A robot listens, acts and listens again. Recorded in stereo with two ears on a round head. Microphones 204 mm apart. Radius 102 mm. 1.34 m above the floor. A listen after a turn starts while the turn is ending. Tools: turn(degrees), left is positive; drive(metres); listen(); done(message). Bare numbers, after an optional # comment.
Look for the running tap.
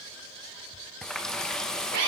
turn(30)
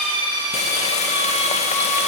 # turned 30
# So it is at 150° left.
turn(150)
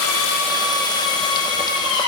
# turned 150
listen()
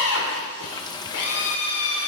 # The running tap is now 20° left.
turn(20)
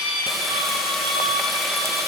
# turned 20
listen()
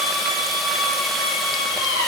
listen()
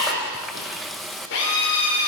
done("Facing the running tap, under 1 m away.")